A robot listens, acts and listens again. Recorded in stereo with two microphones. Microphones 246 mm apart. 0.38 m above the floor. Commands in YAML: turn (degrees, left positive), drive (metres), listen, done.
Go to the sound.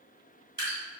turn: -40
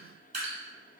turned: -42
turn: -95
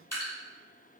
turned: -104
turn: 10
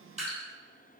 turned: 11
drive: 1.0
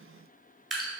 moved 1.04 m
drive: 1.0
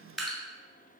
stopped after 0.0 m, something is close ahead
done: "I am next to the dripping."